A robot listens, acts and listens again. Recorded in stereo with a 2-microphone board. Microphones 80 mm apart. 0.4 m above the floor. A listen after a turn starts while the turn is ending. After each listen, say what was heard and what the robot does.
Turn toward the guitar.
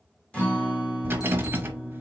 Turn 30° left.
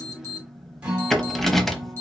So it is at 15° right. Turn 15° right.
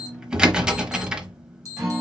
Facing the guitar.